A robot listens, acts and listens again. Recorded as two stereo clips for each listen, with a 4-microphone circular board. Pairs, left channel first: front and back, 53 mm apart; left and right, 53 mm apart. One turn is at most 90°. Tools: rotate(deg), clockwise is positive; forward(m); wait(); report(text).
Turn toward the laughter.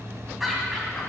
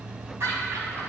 rotate(85)
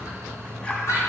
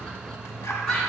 rotate(-15)
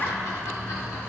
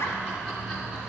wait()
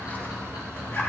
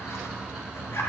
wait()
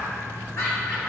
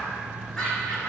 rotate(-15)
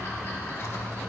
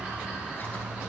wait()
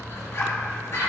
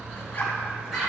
report("Found it: laughter, straight ahead.")